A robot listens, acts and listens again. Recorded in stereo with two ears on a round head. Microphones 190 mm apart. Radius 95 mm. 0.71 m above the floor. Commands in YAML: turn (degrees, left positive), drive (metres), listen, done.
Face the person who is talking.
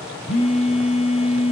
listen: true
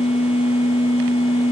listen: true
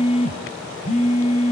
done: "I can't make out anyone speaking to turn to."